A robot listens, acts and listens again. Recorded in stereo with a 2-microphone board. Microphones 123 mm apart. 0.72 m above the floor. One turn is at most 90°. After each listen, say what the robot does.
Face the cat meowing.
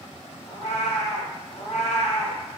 Turn 90° left.
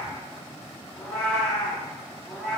Turn 15° left.
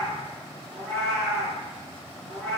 Found it: a cat meowing, straight ahead, over 4 m away.